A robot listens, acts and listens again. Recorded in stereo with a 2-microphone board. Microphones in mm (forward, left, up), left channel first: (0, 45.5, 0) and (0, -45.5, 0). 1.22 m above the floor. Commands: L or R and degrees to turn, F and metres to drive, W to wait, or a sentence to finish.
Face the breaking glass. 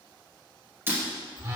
R25
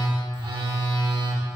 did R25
W
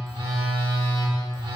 I heard breaking glass, but can't make it out now. It was about straight ahead or 130° right.